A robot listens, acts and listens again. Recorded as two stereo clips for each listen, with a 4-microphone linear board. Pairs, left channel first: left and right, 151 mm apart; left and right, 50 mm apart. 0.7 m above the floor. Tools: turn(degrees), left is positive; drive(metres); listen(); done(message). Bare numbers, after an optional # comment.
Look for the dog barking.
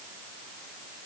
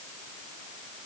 listen()
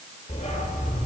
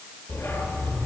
# The dog barking: about 45° left or 135° left.
turn(45)
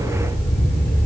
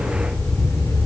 # So it is at 90° left.
turn(90)
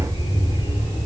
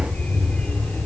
# The dog barking is now 40° left.
turn(40)
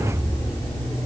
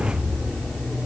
# The dog barking is now 25° left.
turn(25)
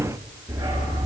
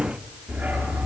# The dog barking is now 20° right.
turn(-20)
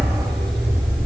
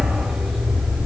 done("Found it: a dog barking, straight ahead.")